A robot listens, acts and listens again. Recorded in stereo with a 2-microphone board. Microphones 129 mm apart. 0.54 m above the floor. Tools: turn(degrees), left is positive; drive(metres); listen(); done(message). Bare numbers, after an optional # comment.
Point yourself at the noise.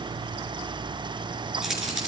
turn(-30)
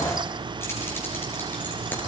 listen()
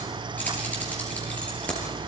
# So it is at 10° left.
turn(10)
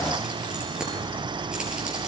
listen()
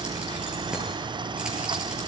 listen()
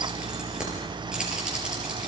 done("Facing the keys jangling, over 4 m away.")